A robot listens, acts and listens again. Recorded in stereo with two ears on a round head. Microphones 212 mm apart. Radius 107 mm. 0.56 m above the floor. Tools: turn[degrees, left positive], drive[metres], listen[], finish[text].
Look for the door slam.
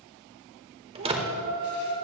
Thought: The door slam: about 25° right or 155° right.
Action: turn[-25]
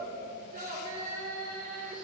Action: listen[]
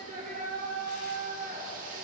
Action: finish[I heard a door slam, but can't make it out now. It was about straight ahead or 130° right.]